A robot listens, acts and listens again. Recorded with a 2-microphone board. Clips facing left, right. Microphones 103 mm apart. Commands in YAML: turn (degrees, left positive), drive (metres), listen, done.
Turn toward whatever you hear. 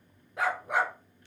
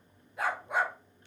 turn: 70
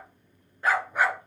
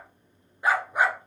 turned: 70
turn: -20
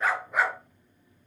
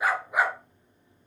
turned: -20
turn: -15
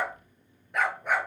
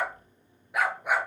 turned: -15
turn: -10
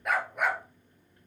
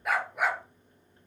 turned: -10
done: "Found it: a dog barking, straight ahead, 2 to 4 m away."